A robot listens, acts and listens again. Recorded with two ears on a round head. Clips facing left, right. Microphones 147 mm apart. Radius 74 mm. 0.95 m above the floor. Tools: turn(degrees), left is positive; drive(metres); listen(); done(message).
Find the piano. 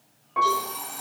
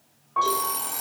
turn(degrees=20)
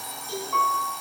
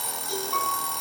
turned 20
done("Facing the piano.")